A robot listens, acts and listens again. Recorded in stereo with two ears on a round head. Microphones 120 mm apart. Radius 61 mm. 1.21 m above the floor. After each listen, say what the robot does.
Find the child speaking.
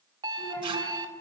Turn 15° left.
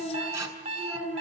Turn 30° left.
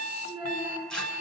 Turn 30° right.
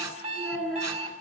Facing the child speaking.